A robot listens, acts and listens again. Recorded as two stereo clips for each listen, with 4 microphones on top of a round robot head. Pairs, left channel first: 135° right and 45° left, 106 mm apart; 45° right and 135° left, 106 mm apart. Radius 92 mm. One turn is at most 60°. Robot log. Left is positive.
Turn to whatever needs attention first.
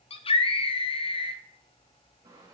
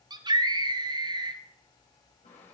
note: The scream: 175° right.
cmd yaw -60
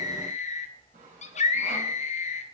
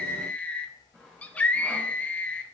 note: The scream is now 120° right.
cmd yaw -60
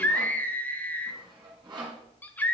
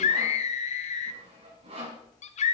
note: The scream is now 60° right.
cmd yaw -60
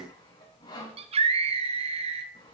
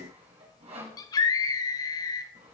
note: The scream is now 15° left.
cmd yaw +15
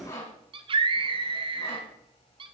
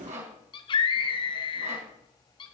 end: Found it: a scream, straight ahead, 1 to 2 m away.